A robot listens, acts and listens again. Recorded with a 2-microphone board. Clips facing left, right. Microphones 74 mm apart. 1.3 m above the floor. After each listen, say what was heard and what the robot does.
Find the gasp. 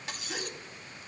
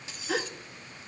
Turn 90° right.
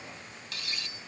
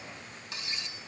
I heard a gasp from this way, but can't make it out now.